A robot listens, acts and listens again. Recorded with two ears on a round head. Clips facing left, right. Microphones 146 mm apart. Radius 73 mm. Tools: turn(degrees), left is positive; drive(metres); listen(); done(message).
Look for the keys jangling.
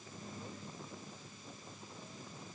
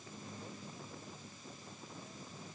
listen()
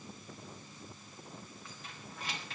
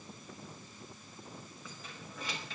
turn(degrees=-90)
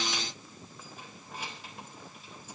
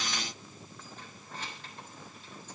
turn(degrees=10)
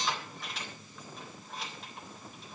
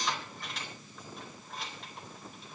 done("Facing the keys jangling, 2 to 4 m away.")